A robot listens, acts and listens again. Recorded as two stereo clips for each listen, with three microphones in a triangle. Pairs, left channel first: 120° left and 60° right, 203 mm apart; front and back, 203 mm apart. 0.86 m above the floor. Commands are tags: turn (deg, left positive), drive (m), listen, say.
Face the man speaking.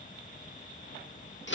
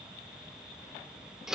<listen/>
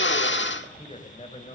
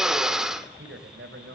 <turn deg="180"/>
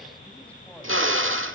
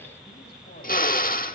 <listen/>
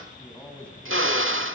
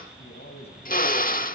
<turn deg="35"/>
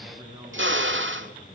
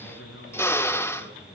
<say>Found it: a man speaking, straight ahead, over 4 m away.</say>